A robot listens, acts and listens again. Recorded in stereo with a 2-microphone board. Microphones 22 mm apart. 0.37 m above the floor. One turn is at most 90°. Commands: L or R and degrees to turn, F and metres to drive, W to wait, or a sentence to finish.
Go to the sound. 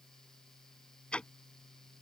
L55
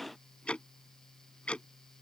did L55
L65
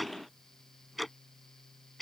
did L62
F1.0
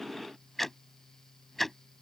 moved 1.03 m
L10
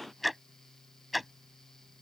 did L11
F1.0
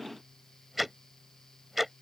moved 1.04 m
F1.0
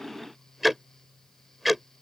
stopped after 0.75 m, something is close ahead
Arrived at the ticking, straight ahead.